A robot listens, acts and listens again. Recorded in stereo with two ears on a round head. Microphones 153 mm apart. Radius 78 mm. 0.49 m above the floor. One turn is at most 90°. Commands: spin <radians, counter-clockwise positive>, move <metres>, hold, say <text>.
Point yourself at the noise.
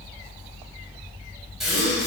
spin 0.52
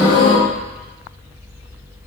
spin 1.57
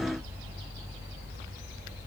spin 1.13
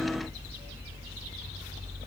say Facing where the gasp came from. I can't hear it now.